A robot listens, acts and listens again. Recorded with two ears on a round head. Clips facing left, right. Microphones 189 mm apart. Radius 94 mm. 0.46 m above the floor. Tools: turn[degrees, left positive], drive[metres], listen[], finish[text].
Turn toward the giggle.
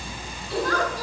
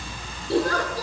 Thought: The giggle: about 30° right or 150° right.
Action: turn[-30]
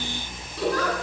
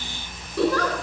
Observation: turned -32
Thought: So it is at 120° right.
Action: turn[-120]
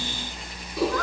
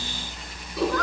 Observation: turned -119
Action: finish[Found it: a giggle, straight ahead, over 4 m away.]